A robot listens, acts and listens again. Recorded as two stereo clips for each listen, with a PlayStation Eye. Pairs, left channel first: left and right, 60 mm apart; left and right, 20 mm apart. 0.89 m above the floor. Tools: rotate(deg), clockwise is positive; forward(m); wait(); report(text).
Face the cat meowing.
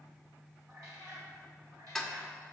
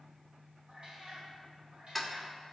rotate(70)
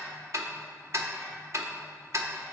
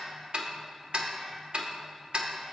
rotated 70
wait()
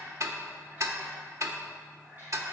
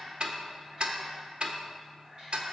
rotate(35)
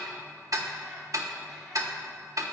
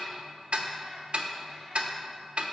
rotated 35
wait()
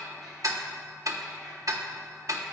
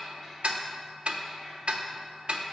wait()
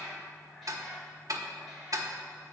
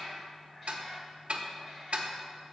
report("Facing the cat meowing.")